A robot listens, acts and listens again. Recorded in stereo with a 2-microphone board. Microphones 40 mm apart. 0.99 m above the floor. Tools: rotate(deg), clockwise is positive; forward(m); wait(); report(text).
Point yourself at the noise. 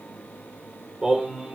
rotate(30)
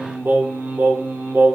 rotate(100)
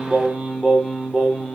rotate(20)
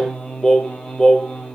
rotate(-10)
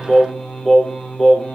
report("Found it: singing, straight ahead, 2 to 4 m away.")